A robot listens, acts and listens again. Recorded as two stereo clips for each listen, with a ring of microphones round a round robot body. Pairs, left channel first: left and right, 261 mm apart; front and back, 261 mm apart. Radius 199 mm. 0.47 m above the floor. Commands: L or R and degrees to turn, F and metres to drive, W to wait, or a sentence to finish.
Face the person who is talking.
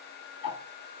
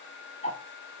W
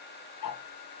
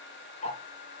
W
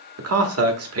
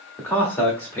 R80
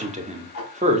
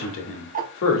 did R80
R30
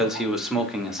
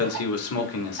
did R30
Facing the man speaking, 1 to 2 m away.